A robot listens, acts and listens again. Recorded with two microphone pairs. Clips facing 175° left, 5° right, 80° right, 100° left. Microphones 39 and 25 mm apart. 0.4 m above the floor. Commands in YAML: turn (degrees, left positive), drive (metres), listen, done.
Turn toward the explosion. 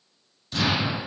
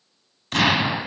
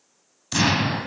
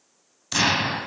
turn: 15
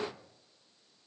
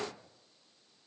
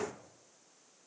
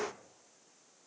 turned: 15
done: "Facing where the explosion came from. I can't hear it now."